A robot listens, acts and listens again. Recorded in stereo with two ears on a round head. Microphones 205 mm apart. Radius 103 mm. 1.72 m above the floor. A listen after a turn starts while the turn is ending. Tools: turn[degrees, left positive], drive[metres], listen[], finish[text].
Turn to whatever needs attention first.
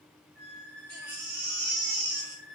Thought: The baby crying: about 70° right or 110° right.
Action: turn[-70]
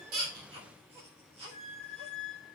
Thought: So it is at 30° right.
Action: turn[-30]
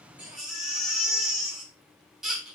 Action: finish[Found it: a baby crying, straight ahead.]